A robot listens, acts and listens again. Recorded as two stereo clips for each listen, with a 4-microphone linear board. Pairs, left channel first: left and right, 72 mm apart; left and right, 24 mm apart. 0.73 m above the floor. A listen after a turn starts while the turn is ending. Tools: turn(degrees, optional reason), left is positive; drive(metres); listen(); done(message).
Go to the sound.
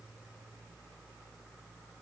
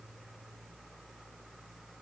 listen()
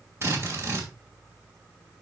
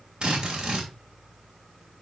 turn(degrees=-40, reason="The drill: about 40° right or 140° right.")
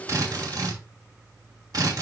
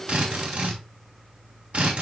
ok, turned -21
turn(degrees=-120, reason="So it is at 120° right.")
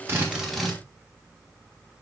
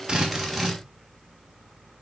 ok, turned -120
drive(metres=1.0)
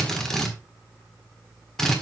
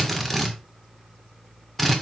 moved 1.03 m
drive(metres=1.0)
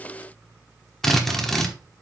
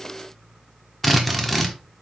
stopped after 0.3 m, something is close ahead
done("Arrived at the drill, straight ahead.")